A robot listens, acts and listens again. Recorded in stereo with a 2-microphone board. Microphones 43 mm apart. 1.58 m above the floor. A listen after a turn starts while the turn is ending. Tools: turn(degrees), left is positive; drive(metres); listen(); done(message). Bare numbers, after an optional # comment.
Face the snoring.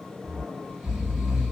turn(-30)
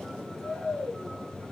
# So it is at 20° left.
turn(20)
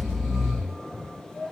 done("Found it: snoring, straight ahead, 1 to 2 m away.")